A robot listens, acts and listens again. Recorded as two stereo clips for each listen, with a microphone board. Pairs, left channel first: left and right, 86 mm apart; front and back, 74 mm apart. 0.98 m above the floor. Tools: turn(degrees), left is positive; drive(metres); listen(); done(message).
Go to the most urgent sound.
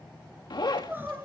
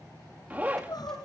turn(degrees=-25)
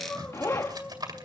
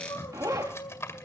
turn(degrees=10)
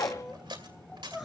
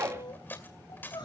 drive(metres=1.0)
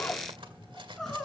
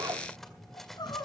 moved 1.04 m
drive(metres=1.0)
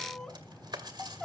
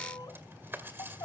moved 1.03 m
drive(metres=1.0)
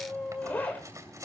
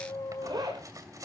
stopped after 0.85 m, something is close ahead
turn(degrees=10)
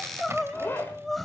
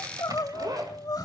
done("I am next to the crying.")